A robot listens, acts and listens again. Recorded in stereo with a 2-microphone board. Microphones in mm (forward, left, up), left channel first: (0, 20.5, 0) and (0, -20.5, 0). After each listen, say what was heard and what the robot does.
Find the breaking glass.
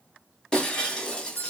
The breaking glass: about 20° left or 160° left. Turn 20° left.
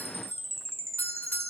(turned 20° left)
Keep listening.
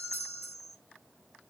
I heard breaking glass, but can't make it out now. It was about straight ahead or 140° left.